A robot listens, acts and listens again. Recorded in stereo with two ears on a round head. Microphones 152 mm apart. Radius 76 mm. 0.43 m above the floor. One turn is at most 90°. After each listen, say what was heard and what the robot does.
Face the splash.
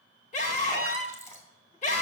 The splash: about 15° left or 165° left. Turn 15° left.
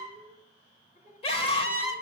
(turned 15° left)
Keep listening.
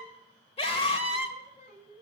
I heard a splash, but can't make it out now. It was about straight ahead or 150° left.